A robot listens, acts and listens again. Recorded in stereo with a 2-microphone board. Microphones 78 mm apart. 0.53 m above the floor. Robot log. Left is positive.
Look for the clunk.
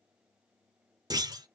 note: The clunk: about 50° right or 130° right.
cmd yaw -50
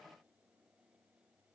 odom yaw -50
cmd idle
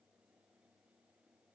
end: I heard a clunk, but can't make it out now. It was about straight ahead or 80° right.